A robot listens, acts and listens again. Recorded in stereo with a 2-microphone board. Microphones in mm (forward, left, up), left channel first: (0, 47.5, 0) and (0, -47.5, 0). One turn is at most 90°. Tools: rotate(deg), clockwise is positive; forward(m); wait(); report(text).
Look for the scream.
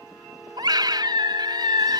rotate(50)
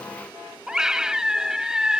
report("Found it: a scream, straight ahead.")